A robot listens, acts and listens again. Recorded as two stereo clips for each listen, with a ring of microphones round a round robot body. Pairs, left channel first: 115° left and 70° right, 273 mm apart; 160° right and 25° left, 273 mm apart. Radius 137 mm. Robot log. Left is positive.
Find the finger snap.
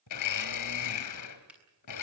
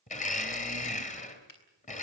note: The finger snap: 155° right.
cmd yaw -155
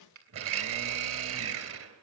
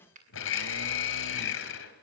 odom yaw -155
note: The finger snap is now 40° right.
cmd yaw -40
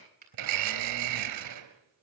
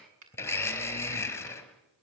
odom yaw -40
note: The finger snap is now 10° right.
cmd yaw -10
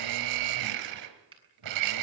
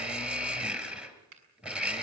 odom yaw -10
end: Found it: a finger snap, straight ahead.